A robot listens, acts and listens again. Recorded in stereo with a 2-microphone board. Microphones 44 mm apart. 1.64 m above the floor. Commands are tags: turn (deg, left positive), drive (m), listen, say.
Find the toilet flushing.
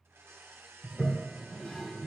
<turn deg="20"/>
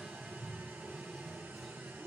<say>Facing the toilet flushing.</say>